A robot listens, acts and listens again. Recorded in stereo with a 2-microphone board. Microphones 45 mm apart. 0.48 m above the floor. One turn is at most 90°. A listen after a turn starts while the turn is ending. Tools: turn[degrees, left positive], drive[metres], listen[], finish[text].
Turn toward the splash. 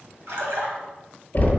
Action: turn[-90]
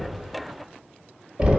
Action: finish[Facing where the splash came from. I can't hear it now.]